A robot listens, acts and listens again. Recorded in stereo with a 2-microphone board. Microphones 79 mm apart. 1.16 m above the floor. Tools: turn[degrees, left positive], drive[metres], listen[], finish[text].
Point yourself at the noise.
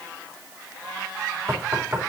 Thought: The knocking: about 30° right or 150° right.
Action: turn[-30]
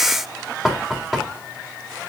Action: finish[Found it: knocking, straight ahead.]